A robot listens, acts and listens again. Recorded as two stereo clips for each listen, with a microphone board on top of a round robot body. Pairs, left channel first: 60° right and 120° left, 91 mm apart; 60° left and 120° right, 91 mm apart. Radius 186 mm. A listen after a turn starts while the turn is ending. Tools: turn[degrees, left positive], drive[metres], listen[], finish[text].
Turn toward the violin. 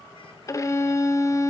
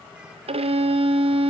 Thought: The violin: 120° right.
Action: turn[-120]
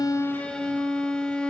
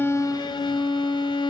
Thought: The violin is now 20° left.
Action: turn[20]
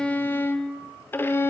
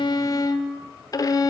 Thought: The violin is now 10° left.
Action: turn[10]
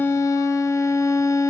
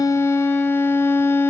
Action: finish[Facing the violin, under 1 m away.]